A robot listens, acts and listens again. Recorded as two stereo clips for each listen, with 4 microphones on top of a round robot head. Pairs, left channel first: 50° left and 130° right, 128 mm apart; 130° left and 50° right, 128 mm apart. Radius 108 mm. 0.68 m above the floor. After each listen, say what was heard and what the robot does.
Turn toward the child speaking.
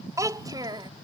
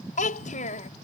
The child speaking: 170° left. Turn 170° left.
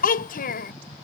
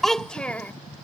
The child speaking is now 55° left. Turn 55° left.
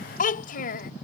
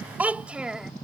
The child speaking is now 40° left. Turn 40° left.
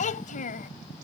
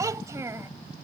The child speaking is now 25° left. Turn 25° left.
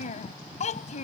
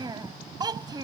The child speaking is now 15° left. Turn 15° left.
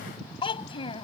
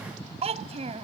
Found it: a child speaking, straight ahead.